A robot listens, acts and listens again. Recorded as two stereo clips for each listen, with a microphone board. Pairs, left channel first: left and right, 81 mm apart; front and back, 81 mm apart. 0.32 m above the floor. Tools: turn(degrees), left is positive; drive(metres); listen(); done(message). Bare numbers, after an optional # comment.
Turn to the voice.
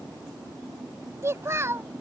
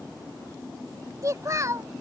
# The child speaking: 140° right.
turn(-140)
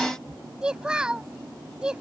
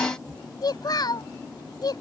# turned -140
# The child speaking is now 10° right.
turn(-10)
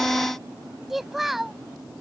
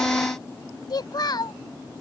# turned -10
done("Found it: a child speaking, straight ahead.")